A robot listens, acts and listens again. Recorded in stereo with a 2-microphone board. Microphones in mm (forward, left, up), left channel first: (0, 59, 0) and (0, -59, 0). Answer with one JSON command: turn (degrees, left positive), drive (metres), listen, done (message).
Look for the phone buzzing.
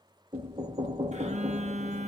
{"turn": -75}
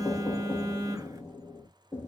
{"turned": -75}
{"turn": -30}
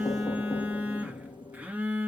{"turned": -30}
{"turn": -10}
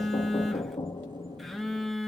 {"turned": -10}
{"done": "Facing the phone buzzing, 1 to 2 m away."}